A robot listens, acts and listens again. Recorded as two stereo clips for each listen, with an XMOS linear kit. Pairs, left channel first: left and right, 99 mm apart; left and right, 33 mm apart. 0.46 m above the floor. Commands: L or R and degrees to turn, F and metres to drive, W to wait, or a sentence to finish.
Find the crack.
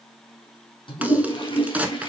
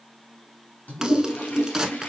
R30
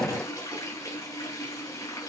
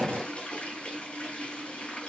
W
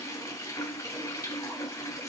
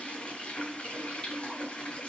I heard a crack, but can't make it out now. It was about 15° left or 135° right.